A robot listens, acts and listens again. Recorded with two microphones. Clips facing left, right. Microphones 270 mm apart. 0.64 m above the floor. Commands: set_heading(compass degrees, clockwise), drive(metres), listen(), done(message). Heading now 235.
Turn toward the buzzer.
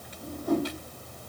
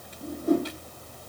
listen()
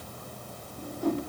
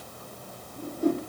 listen()
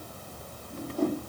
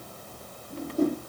done("I can't make out a buzzer to turn to.")